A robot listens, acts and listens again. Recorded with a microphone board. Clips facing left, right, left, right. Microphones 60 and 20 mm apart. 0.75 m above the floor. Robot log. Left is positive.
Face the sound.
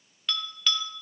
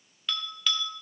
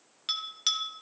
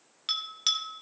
cmd yaw +30
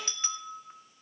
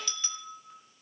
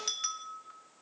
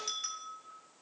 note: So it is at 150° left.
cmd yaw +150
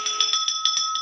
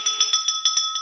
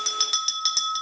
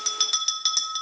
end: Facing the bell.